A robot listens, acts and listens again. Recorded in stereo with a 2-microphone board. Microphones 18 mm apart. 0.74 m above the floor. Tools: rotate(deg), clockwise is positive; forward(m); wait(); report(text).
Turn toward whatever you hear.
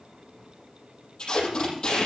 rotate(-40)
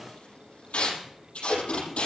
rotate(-100)
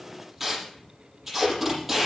rotate(10)
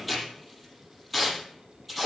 report("Facing the tape being pulled.")